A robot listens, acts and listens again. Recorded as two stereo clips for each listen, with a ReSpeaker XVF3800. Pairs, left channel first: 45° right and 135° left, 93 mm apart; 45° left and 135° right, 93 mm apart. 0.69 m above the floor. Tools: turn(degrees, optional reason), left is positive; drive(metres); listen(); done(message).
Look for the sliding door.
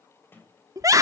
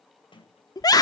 turn(degrees=20, reason="The sliding door: 20° left.")
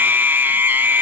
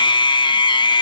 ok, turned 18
listen()
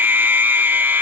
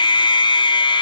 listen()
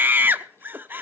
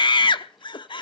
done("I heard a sliding door from this way, but can't make it out now.")